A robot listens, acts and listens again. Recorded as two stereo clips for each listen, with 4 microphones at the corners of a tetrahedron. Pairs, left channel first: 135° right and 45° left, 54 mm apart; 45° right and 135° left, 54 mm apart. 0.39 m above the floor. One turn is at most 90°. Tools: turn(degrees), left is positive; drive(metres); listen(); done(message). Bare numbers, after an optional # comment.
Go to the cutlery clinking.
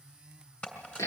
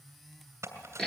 # The cutlery clinking: 160° left.
turn(90)
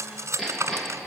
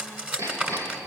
# The cutlery clinking is now 70° left.
turn(70)
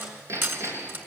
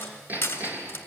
drive(1.0)
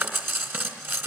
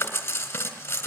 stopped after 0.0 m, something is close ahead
done("Something is in my way. I am facing the cutlery clinking but have not reached it.")